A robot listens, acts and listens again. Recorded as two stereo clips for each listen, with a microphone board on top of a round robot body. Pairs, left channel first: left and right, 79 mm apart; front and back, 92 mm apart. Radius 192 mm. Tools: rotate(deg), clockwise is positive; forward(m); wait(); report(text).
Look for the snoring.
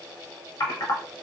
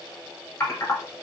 wait()
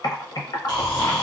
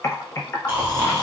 rotate(-115)
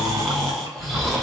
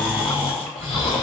report("Found it: snoring, straight ahead.")